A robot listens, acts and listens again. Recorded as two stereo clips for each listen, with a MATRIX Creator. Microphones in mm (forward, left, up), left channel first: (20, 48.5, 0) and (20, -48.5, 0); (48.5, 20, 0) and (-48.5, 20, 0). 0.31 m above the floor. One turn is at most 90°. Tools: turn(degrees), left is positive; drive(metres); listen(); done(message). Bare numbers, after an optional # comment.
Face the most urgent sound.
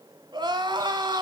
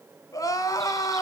# The crying: 50° right.
turn(-50)
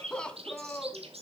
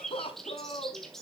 # The crying is now 10° left.
turn(10)
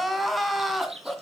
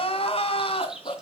done("Facing the crying, 1 to 2 m away.")